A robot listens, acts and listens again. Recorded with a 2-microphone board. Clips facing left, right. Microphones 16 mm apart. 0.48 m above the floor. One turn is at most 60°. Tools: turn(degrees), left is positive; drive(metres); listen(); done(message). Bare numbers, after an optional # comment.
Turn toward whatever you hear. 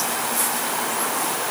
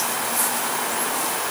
listen()
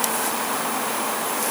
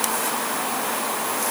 listen()
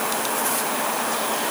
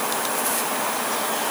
done("I can't make out anything.")